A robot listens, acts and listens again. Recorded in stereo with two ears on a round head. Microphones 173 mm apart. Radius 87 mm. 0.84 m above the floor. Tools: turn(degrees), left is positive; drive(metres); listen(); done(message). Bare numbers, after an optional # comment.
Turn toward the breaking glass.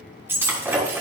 turn(-30)
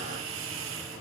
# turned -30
listen()
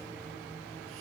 done("I heard breaking glass, but can't make it out now. It was about 15° left or 135° right.")